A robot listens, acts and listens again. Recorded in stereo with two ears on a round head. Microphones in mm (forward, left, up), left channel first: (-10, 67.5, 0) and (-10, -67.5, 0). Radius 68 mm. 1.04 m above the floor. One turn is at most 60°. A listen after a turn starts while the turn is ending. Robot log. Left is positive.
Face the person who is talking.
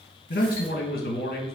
note: The man speaking: about 65° left or 115° left.
cmd yaw +60
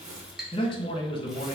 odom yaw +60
note: So it is at 35° left.
cmd yaw +35
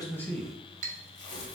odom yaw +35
cmd idle
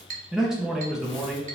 end: Facing the man speaking, under 1 m away.